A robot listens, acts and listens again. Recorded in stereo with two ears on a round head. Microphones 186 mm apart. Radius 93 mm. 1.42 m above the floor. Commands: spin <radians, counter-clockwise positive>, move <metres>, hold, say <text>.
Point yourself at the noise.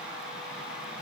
hold
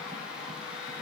hold
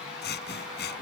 spin 0.96
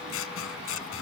spin 1.22
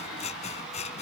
spin 0.52
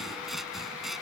say Facing the scissors.